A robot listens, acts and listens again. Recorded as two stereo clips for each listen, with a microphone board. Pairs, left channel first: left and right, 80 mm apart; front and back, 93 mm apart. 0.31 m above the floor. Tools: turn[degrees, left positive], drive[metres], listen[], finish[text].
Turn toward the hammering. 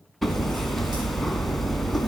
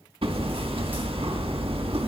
Thought: The hammering: 175° left.
Action: turn[175]
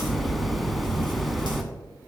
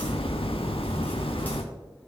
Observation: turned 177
Action: finish[Found it: hammering, straight ahead, under 1 m away.]